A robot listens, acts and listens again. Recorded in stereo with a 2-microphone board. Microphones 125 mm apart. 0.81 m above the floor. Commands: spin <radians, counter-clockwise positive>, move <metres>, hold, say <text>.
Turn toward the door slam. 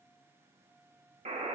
hold
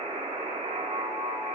hold
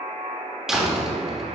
spin -0.52
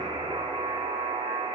hold
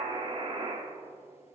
say I heard a door slam, but can't make it out now. It was about 25° left or 145° right.